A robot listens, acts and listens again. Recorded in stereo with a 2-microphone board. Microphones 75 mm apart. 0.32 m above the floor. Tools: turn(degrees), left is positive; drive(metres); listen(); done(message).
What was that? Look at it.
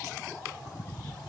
listen()
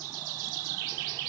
listen()
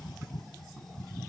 done("I can't make out anything to turn to.")